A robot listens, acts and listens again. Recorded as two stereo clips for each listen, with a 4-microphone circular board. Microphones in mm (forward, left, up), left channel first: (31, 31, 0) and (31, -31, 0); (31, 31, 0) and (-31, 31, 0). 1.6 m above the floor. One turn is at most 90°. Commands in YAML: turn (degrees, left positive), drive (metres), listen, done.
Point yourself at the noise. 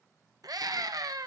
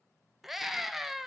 turn: -90
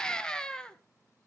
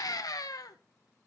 turn: 15
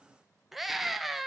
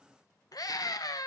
done: "Facing the scream."